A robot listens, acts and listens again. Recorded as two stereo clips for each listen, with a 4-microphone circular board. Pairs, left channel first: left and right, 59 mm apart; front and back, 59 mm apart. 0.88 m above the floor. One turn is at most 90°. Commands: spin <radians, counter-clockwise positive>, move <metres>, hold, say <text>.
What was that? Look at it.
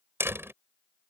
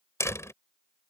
spin -0.70
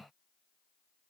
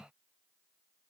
say I heard a door slam from this way, but can't make it out now.